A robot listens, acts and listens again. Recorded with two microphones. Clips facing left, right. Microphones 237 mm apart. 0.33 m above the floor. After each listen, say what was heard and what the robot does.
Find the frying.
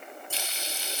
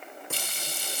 The frying: about 55° right or 125° right. Turn 55° right.
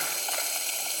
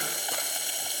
So it is at 15° right. Turn 15° right.
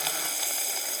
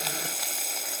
Facing the frying.